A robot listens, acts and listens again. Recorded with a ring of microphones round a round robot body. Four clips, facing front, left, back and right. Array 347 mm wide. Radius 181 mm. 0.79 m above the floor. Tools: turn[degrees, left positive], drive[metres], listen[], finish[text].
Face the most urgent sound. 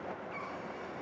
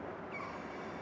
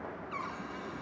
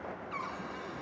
Action: listen[]
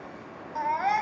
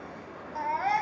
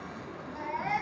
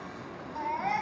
Thought: The baby crying: 25° left.
Action: turn[25]
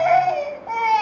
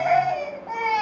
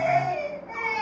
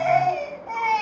Action: finish[Facing the baby crying, over 4 m away.]